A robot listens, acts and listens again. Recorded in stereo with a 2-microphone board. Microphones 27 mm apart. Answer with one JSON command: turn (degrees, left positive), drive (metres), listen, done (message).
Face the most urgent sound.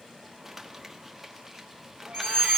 {"turn": 35}
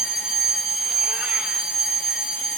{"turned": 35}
{"done": "Found it: a fire alarm, straight ahead, over 4 m away."}